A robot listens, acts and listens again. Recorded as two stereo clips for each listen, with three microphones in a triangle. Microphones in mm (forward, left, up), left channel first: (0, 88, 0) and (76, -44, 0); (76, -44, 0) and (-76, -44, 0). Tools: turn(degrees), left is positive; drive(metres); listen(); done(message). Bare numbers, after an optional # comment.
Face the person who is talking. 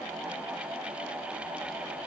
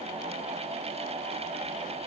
listen()
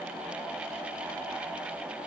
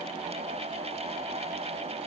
listen()
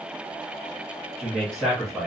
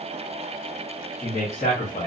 # The man speaking: 35° left.
turn(35)
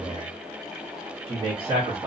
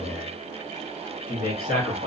done("Facing the man speaking.")